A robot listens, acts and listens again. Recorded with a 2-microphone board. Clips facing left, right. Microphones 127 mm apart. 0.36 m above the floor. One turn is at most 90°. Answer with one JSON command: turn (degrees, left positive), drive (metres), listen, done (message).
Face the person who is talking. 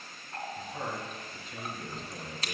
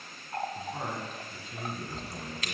{"turn": -30}
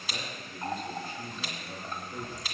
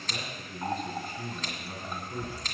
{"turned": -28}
{"turn": -90}
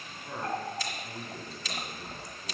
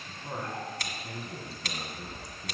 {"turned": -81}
{"turn": -40}
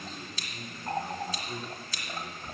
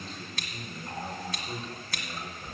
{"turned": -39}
{"done": "Found it: a man speaking, straight ahead, 2 to 4 m away."}